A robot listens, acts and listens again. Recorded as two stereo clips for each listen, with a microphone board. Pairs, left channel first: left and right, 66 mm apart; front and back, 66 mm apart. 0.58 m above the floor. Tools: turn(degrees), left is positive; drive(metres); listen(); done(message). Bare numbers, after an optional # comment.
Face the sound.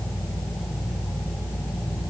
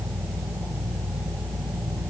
listen()
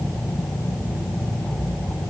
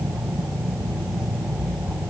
listen()
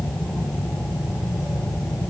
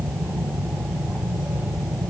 done("I can't make out anything to turn to.")